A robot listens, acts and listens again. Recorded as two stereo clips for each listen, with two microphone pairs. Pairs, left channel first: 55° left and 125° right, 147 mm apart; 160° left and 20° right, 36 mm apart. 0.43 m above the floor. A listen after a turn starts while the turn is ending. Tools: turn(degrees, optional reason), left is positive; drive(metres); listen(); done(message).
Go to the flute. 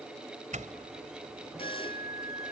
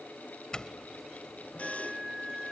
turn(degrees=55, reason="The flute: 55° left.")
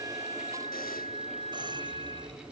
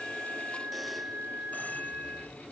turn(degrees=15, reason="The flute is now 15° left.")
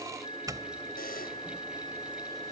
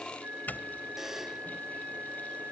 drive(metres=1.0)
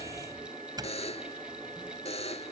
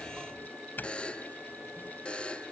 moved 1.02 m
listen()
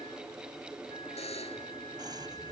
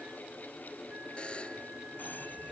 listen()
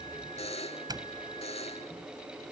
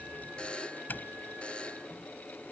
done("I heard a flute from this way, but can't make it out now. I did not reach it.")